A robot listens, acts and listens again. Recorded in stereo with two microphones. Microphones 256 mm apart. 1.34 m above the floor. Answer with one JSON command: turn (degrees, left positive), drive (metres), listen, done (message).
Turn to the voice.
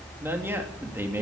{"turn": -30}
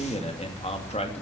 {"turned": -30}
{"turn": 25}
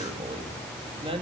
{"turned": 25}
{"turn": -20}
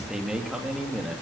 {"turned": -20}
{"done": "Found it: a man speaking, straight ahead."}